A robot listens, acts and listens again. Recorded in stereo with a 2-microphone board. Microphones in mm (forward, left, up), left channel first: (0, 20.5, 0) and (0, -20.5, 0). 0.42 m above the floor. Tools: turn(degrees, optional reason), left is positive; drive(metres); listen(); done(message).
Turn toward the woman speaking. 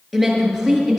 turn(degrees=30)
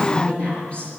turn(degrees=150, reason="So it is at 150° left.")
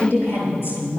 turn(degrees=75, reason="The woman speaking is now 75° left.")
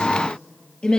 turn(degrees=25, reason="The woman speaking is now 25° left.")
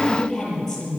done("Found it: a woman speaking, straight ahead, over 4 m away.")